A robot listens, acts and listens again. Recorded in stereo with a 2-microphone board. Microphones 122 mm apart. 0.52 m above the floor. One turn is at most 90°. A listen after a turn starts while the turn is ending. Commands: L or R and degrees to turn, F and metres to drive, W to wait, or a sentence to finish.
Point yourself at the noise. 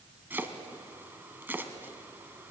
R15
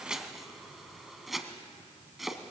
Found it: chopping, straight ahead, 1 to 2 m away.